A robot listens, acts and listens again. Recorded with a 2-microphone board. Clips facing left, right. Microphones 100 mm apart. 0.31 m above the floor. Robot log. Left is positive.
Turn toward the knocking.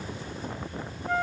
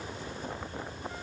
cmd idle
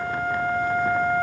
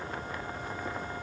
cmd idle
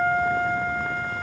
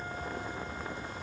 end: I can't make out knocking to turn to.